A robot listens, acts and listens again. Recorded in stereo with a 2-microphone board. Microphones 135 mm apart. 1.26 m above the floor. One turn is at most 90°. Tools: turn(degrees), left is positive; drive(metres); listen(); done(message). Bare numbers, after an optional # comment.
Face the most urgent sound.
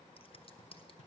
listen()
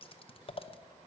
listen()
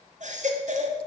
# The baby crying: about 65° right or 115° right.
turn(-65)
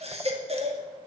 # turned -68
# So it is at 50° right.
turn(-50)
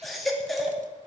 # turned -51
done("Facing the baby crying, 2 to 4 m away.")